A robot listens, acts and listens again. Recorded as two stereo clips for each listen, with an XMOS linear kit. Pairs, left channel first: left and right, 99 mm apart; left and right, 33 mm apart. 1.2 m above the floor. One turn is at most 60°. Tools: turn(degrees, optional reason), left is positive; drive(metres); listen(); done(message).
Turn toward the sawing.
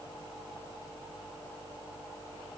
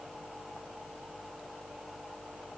listen()
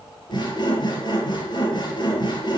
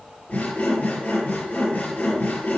turn(degrees=50, reason="The sawing: about 50° left or 130° left.")
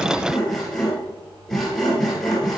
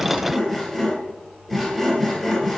done("Found it: sawing, straight ahead.")